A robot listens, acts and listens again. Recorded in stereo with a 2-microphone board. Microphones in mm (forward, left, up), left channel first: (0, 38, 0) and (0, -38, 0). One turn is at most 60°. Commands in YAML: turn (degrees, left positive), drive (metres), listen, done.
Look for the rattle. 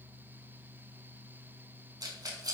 turn: -55
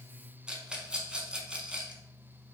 turn: -15
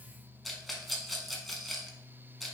done: "Facing the rattle."